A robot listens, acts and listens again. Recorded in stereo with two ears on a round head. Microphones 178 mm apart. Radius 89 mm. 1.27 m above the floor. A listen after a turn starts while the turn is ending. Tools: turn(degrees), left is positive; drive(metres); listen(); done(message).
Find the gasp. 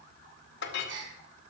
turn(degrees=-65)
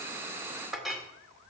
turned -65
listen()
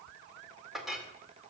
done("I heard a gasp, but can't make it out now. It was about straight ahead or 50° right.")